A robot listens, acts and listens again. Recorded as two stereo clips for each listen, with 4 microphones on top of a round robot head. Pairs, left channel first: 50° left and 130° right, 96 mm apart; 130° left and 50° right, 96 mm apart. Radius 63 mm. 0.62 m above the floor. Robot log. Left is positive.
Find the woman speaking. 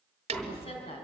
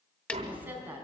note: The woman speaking: 25° left.
cmd yaw +25
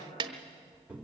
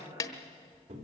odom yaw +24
end: Facing the woman speaking, over 4 m away.